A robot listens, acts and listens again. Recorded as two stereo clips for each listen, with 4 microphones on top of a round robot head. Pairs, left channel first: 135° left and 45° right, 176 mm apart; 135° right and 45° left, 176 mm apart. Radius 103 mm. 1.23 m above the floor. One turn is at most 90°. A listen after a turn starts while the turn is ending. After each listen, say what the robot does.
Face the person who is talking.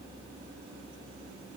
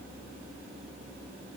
Keep listening.
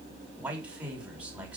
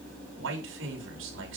Turn 40° left.
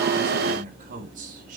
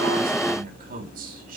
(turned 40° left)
Facing the man speaking.